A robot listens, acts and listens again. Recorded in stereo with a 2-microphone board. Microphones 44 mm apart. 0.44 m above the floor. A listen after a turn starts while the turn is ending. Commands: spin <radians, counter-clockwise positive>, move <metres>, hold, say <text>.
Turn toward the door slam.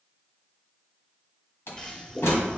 spin 1.31
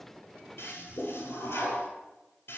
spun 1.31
hold
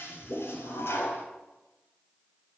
say I heard a door slam, but can't make it out now. It was about straight ahead or 30° left.